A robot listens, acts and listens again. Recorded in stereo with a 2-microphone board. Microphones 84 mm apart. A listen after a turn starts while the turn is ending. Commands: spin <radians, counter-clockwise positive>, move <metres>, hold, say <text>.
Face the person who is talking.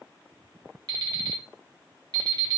hold
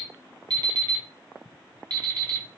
hold
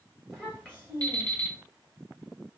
spin -0.35
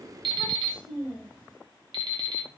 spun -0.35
say Facing the child speaking, 1 to 2 m away.